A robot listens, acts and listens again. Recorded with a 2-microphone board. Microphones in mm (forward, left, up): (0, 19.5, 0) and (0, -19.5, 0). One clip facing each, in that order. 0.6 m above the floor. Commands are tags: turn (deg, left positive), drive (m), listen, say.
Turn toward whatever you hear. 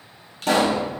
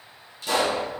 <turn deg="70"/>
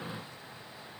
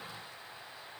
<listen/>
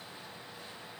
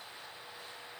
<say>I heard a pop, but can't make it out now. It was about straight ahead or 40° left.</say>